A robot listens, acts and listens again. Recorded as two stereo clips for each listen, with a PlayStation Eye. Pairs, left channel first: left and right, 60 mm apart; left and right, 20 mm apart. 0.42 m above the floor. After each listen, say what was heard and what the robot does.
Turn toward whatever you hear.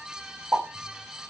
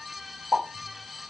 The pop: about 45° right or 135° right. Turn 45° right.
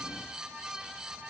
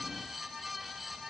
Keep listening.
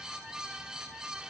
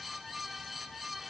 I heard a pop, but can't make it out now. It was about straight ahead or 90° right.